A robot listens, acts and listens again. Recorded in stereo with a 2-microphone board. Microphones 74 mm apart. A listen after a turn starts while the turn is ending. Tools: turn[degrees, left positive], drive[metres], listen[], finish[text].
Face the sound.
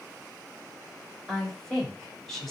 Action: turn[30]
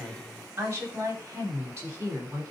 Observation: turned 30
Thought: So it is at 35° right.
Action: turn[-35]
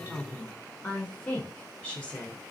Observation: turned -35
Thought: The woman speaking is now 25° left.
Action: turn[25]
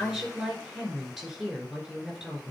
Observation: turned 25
Action: finish[Facing the woman speaking.]